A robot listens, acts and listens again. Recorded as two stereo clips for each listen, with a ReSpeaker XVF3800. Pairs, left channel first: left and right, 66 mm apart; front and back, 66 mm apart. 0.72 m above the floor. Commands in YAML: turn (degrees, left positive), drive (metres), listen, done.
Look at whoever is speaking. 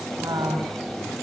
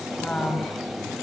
turn: -70
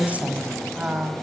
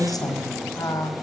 turn: -20
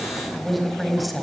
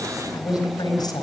done: "Found it: a woman speaking, straight ahead."